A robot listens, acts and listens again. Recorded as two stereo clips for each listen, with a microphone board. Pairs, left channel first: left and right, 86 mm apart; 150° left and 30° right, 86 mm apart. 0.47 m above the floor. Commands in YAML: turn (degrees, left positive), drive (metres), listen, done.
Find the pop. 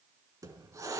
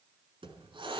listen: true
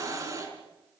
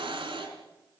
listen: true
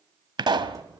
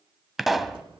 turn: -120
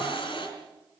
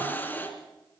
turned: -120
done: "Facing where the pop came from. I can't hear it now."